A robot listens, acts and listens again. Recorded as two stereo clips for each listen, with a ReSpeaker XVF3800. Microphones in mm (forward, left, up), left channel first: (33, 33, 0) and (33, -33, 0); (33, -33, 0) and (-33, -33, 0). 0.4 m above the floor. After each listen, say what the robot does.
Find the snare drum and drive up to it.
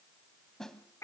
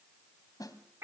Drive 1.0 m forward.
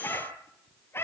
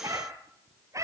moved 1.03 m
Keep listening.
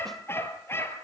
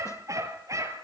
Keep listening.
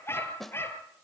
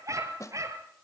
Drive 1.0 m forward.
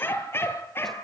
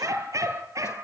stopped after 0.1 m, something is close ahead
Keep listening.
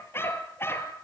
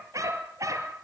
Keep listening.
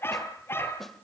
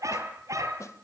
Arrived at the snare drum, straight ahead.